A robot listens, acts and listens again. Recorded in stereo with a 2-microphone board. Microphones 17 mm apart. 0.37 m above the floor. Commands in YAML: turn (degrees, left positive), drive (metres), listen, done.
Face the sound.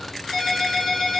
turn: 40
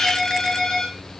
turn: 100
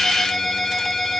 done: "Found it: a ringtone, straight ahead."